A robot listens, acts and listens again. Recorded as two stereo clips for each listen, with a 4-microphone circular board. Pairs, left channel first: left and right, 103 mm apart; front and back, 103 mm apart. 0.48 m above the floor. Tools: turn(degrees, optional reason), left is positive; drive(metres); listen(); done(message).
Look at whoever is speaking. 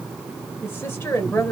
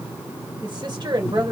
turn(degrees=155, reason="The woman speaking: 155° left.")
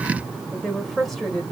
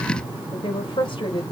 done("Facing the woman speaking, 2 to 4 m away.")